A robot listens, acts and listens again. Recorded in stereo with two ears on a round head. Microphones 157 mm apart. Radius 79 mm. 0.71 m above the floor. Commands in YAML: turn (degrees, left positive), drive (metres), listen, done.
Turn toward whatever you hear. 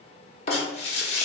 turn: 35
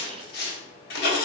turn: 105
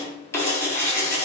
turn: 15
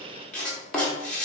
turn: 10
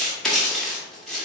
done: "Facing the writing."